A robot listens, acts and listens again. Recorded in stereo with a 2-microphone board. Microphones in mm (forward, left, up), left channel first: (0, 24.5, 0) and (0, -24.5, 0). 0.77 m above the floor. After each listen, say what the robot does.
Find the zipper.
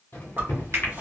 Turn 40° right.
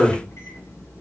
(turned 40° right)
Found it: a zipper, straight ahead, 1 to 2 m away.